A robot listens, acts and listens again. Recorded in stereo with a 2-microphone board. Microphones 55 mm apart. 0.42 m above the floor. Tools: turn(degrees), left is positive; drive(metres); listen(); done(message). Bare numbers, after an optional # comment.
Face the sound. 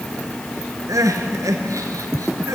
turn(-90)
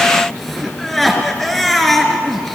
done("Found it: crying, straight ahead, 2 to 4 m away.")